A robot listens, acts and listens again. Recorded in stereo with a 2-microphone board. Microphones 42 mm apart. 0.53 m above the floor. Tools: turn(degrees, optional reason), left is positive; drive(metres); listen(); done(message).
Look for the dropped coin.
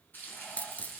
turn(degrees=35, reason="The dropped coin: about 35° left or 145° left.")
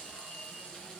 listen()
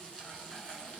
done("I heard a dropped coin, but can't make it out now. It was about straight ahead or 110° left.")